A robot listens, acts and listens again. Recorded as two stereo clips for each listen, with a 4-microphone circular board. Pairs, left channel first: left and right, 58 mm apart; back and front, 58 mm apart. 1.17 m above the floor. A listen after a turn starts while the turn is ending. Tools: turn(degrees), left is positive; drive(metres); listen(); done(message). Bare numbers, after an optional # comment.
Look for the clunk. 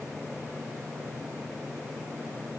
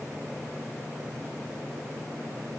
listen()
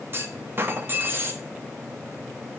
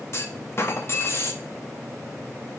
# The clunk: 140° right.
turn(-140)
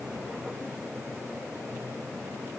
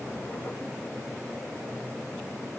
done("I heard a clunk from this way, but can't make it out now.")